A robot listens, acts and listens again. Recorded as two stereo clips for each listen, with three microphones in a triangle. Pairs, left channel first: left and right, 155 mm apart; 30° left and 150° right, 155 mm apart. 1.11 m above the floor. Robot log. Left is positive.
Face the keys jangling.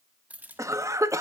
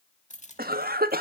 note: The keys jangling: 10° right.
cmd yaw -10
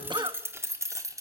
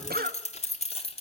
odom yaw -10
note: The keys jangling is now 20° right.
cmd yaw -20
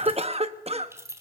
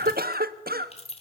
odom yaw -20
note: The keys jangling is now 20° right.
cmd yaw -20
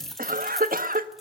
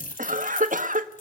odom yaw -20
end: Facing the keys jangling, 2 to 4 m away.